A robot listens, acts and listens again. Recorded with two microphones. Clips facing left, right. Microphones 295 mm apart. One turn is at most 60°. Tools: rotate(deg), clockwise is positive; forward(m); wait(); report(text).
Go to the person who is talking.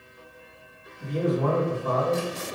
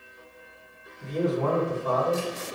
rotate(-55)
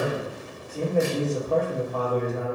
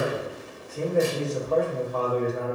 rotate(-60)
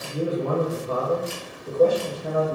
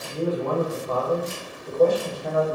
rotate(-15)
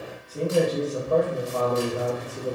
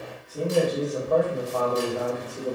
forward(1.0)
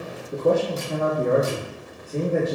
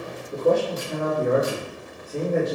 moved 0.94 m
forward(1.0)
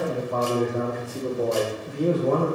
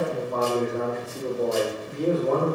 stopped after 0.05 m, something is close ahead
report("I am next to the man speaking.")